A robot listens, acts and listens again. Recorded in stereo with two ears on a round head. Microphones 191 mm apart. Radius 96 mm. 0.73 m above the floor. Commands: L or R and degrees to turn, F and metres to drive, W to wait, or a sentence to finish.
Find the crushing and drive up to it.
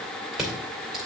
L30
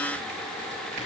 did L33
W
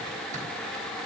W
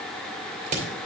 R35
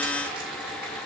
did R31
W
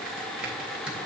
F1.0
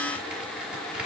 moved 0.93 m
W
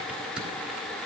F1.0
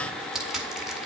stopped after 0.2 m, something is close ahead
I am next to the crushing.